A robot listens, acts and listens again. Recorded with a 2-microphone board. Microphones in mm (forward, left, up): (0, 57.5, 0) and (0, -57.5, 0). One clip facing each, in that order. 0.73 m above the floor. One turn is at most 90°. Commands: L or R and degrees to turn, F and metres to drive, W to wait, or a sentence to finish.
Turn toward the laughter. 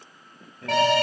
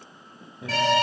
R15
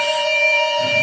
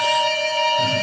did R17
W
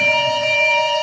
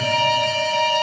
W
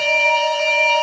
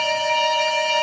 I heard laughter, but can't make it out now. It was about straight ahead or 145° right.